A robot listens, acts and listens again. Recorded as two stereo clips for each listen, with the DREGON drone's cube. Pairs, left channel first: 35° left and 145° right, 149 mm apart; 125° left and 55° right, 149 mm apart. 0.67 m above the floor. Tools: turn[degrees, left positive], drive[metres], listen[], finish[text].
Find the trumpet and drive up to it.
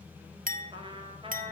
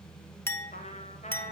Thought: The trumpet: 160° left.
Action: turn[160]
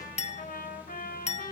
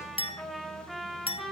Thought: The trumpet is now 35° left.
Action: turn[35]
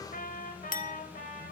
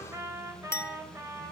Thought: The trumpet is now 15° left.
Action: turn[15]
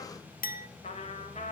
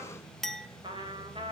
Action: drive[1.0]
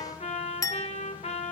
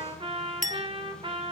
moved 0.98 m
Action: drive[1.0]
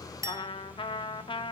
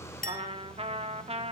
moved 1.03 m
Thought: The trumpet is now 15° right.
Action: turn[-15]
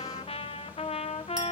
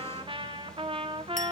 Action: drive[1.0]
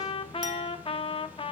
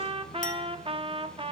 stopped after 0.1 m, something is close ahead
Thought: The trumpet is now 10° right.
Action: turn[-10]
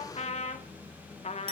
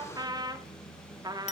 Action: finish[Arrived at the trumpet, straight ahead.]